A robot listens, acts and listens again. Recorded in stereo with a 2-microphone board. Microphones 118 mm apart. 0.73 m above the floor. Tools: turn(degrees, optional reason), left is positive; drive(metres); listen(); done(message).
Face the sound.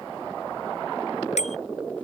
turn(degrees=75, reason="The bicycle bell: about 75° left or 105° left.")
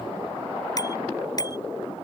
turn(degrees=30, reason="So it is at 30° left.")
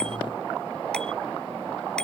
listen()
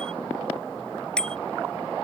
done("Found it: a bicycle bell, straight ahead.")